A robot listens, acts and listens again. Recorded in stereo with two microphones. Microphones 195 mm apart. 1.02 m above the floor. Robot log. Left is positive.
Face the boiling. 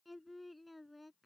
cmd idle
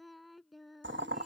note: The boiling: about 75° right or 105° right.
cmd yaw -75
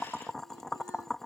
end: Facing the boiling.